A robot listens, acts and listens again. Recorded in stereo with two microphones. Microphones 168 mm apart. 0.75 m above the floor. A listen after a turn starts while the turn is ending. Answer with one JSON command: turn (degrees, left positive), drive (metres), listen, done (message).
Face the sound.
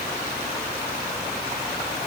{"listen": true}
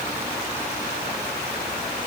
{"listen": true}
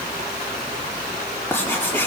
{"turn": 30}
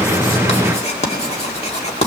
{"turn": 135}
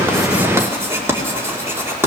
{"turn": -15}
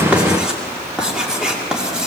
{"done": "Found it: writing, straight ahead, 2 to 4 m away."}